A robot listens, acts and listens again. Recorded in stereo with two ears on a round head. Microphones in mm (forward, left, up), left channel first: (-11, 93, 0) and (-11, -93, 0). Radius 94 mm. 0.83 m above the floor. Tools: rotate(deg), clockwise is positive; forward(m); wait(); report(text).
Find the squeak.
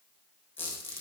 rotate(-30)
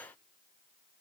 wait()
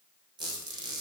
rotate(20)
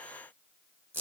rotate(10)
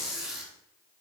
report("Found it: a squeak, straight ahead, 2 to 4 m away.")